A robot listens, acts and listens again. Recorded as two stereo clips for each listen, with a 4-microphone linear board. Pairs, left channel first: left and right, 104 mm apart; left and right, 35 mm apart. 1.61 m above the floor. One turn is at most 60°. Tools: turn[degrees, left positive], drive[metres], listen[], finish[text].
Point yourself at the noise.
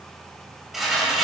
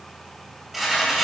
Action: turn[-30]
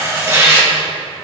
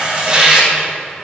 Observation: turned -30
Thought: So it is at 150° right.
Action: turn[-60]
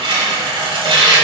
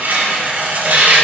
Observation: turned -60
Thought: The tearing paper is now 115° right.
Action: turn[-60]
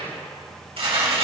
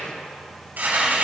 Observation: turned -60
Thought: The tearing paper is now 75° right.
Action: turn[-60]
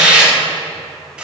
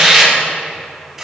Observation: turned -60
Thought: The tearing paper is now 10° right.
Action: turn[-10]
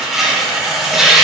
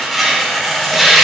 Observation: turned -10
Action: finish[Facing the tearing paper, 2 to 4 m away.]